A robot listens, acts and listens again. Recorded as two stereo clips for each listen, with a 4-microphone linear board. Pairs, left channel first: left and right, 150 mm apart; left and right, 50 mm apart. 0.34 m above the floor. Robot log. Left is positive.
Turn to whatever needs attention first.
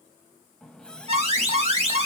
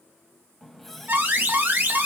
note: The alarm: about 45° right or 135° right.
cmd yaw -45
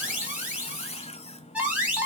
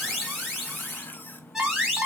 note: So it is at 10° right.
cmd yaw -10
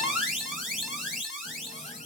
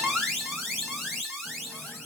end: Facing the alarm.